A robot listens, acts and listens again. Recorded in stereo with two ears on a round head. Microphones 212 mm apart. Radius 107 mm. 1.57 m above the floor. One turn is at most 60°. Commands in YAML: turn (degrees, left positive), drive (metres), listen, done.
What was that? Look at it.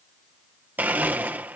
turn: -30
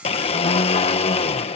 turn: 25
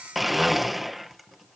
done: "Facing the blender."